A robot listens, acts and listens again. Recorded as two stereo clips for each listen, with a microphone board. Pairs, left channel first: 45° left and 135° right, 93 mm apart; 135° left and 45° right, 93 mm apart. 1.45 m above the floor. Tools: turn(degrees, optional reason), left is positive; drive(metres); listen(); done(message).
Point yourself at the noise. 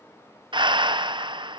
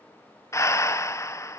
turn(degrees=-165, reason="The breathing: 165° right.")
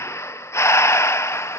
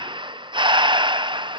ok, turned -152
turn(degrees=-15, reason="The breathing is now 15° right.")
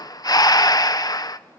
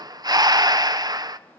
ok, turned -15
done("Facing the breathing.")